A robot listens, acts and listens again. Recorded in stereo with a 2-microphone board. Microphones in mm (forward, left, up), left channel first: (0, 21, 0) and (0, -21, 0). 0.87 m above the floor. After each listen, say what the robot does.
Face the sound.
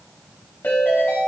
Turn 50° left.
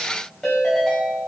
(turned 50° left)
Found it: a ringtone, straight ahead.